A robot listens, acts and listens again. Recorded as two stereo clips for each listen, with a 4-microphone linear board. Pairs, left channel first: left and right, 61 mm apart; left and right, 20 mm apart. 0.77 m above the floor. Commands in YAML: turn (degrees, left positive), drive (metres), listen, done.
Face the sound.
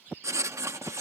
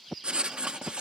turn: -55
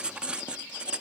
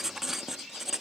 turn: -20
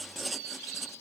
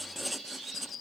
done: "Found it: writing, straight ahead."